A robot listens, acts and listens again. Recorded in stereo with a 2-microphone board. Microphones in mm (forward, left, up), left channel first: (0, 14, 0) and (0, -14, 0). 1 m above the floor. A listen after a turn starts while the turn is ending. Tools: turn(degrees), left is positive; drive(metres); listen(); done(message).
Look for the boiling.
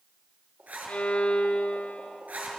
turn(degrees=-65)
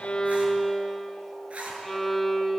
listen()
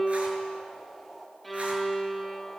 done("Found it: boiling, straight ahead.")